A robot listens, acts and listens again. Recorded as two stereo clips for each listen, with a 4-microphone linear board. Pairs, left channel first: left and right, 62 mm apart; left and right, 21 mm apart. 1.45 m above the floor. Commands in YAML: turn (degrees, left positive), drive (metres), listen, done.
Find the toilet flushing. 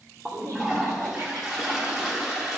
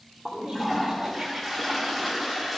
turn: -30
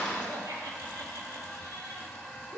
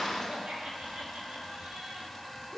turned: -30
turn: 15
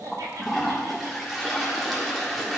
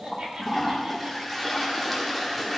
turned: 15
done: "Found it: a toilet flushing, straight ahead."